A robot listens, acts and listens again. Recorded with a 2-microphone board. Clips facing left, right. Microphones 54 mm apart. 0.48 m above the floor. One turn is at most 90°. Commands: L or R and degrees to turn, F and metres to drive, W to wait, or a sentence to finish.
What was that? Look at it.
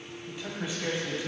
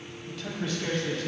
L30
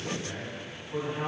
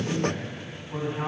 R20
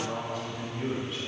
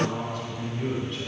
Found it: a man speaking, straight ahead.